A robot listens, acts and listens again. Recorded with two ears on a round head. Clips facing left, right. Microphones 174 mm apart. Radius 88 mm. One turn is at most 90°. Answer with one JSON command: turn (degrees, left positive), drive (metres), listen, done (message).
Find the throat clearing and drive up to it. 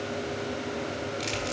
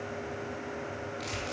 {"listen": true}
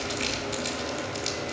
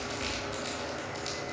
{"listen": true}
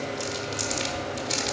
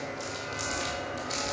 {"done": "I can't make out throat clearing to turn to."}